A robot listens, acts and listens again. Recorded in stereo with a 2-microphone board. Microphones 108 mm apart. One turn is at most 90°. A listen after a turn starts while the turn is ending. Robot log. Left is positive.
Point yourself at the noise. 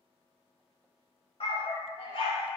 note: The dog barking: about 50° left or 130° left.
cmd yaw +50
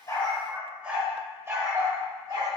note: So it is at 40° right.
cmd yaw -40
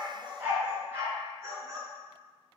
note: The dog barking is now 30° right.
cmd yaw -30
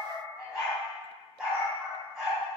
end: Found it: a dog barking, straight ahead, 1 to 2 m away.